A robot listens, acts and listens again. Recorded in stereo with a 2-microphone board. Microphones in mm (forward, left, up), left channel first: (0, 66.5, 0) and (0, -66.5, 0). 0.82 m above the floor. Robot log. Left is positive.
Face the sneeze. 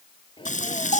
note: The sneeze: about 40° left or 140° left.
cmd yaw +40
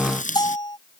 cmd idle
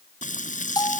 end: I heard a sneeze, but can't make it out now. It was about straight ahead or 100° left.